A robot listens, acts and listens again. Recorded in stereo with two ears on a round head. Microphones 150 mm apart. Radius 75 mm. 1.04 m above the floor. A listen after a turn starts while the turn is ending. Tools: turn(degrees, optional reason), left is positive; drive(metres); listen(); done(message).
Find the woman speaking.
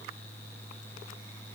listen()
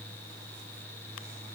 listen()
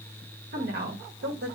turn(degrees=-70, reason="The woman speaking: about 70° right or 110° right.")
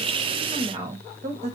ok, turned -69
turn(degrees=-40, reason="So it is at 40° right.")
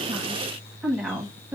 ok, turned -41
turn(degrees=-10, reason="The woman speaking is now 10° right.")
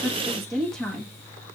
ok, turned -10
done("Found it: a woman speaking, straight ahead.")